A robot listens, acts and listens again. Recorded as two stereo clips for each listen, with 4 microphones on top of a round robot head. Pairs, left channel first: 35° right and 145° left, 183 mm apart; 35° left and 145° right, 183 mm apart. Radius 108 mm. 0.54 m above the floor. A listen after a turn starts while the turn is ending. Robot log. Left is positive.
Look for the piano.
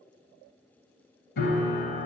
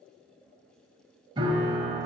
note: The piano: 75° right.
cmd yaw -75
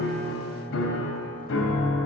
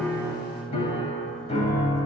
note: The piano is now 20° right.
cmd yaw -20
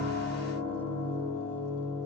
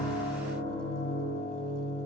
end: Facing the piano.